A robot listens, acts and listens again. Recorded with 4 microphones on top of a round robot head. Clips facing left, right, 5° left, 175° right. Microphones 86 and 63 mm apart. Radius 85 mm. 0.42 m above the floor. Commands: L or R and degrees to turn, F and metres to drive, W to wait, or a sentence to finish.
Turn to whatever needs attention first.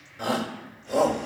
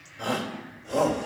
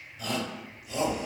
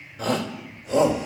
L175
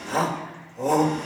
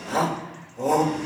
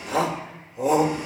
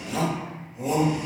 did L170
Facing the shout.